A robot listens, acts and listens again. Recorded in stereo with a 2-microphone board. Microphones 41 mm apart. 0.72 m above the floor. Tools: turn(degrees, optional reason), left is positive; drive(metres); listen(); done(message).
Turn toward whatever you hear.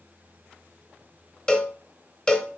turn(degrees=15, reason="The cowbell: about 15° left or 165° left.")
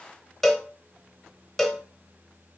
done("Facing the cowbell.")